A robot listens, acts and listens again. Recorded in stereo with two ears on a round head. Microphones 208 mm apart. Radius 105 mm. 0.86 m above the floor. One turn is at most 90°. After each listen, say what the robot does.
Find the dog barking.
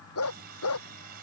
Turn 75° left.
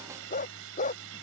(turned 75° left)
Turn 30° left.
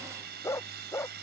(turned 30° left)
Turn 10° left.
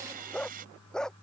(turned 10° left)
Facing the dog barking.